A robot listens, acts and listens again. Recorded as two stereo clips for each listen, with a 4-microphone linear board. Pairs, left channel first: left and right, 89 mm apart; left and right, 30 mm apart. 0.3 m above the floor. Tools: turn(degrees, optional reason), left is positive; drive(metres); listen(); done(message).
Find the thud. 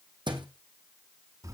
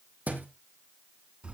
turn(degrees=-60, reason="The thud: about 60° right or 120° right.")
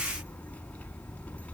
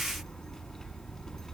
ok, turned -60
listen()
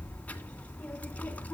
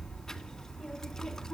done("I heard a thud, but can't make it out now. It was about straight ahead or 60° right.")